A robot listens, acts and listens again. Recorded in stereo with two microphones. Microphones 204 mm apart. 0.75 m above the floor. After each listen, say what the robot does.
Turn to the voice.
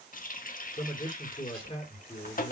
Turn 30° left.
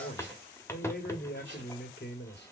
Turn 120° left.
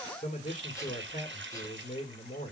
Turn 40° left.
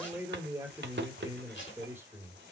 Turn 10° right.
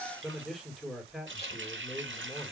Found it: a man speaking, straight ahead, 1 to 2 m away.